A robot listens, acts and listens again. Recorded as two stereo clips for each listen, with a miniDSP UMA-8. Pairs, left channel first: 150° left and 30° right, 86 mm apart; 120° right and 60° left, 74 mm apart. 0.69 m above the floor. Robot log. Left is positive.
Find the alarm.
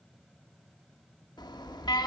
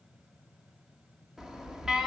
note: The alarm: 140° left.
cmd yaw +140
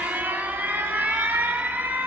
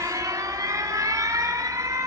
note: The alarm is now 35° left.
cmd yaw +35
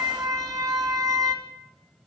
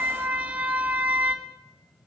end: Found it: an alarm, straight ahead, 1 to 2 m away.